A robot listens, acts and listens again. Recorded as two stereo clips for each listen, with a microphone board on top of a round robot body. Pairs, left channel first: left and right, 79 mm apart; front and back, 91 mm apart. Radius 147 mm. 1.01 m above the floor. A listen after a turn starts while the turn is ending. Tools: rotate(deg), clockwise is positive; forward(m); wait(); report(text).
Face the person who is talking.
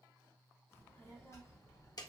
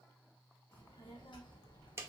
rotate(-45)
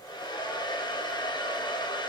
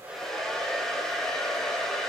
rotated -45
wait()
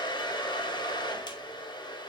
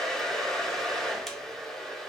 wait()
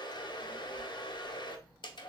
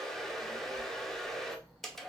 rotate(-90)
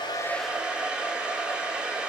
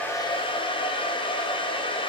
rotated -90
wait()
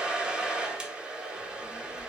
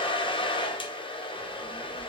rotate(10)
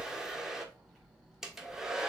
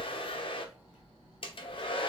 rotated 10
report("Facing the child speaking.")